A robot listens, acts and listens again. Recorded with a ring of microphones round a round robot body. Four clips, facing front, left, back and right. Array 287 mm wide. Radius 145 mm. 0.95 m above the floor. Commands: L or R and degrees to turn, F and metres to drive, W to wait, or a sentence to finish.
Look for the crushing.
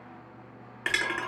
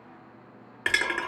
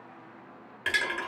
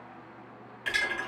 L70
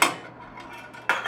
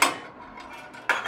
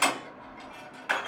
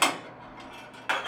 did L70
L15
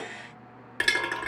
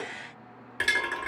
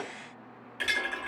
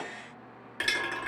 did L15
Facing the crushing.